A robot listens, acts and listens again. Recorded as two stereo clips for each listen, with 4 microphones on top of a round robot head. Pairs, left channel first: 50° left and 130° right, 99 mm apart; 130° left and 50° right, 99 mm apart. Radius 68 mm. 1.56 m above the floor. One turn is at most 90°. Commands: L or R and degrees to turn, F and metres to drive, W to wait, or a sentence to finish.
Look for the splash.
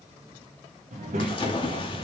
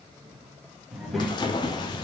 L85
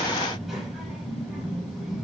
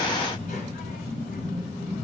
I heard a splash from this way, but can't make it out now.